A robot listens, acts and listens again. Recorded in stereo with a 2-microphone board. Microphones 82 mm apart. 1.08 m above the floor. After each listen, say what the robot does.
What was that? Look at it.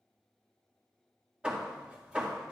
Turn 30° right.
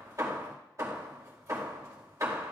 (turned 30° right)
Turn 135° right.
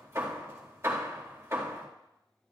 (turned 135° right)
Turn 35° right.
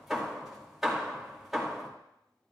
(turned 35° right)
Facing the hammering.